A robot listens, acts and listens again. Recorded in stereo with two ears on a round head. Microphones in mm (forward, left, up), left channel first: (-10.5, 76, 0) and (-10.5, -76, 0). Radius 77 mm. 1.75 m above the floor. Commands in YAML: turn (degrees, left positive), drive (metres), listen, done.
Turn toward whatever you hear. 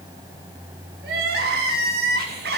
turn: -60
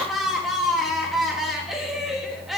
done: "Found it: crying, straight ahead, 2 to 4 m away."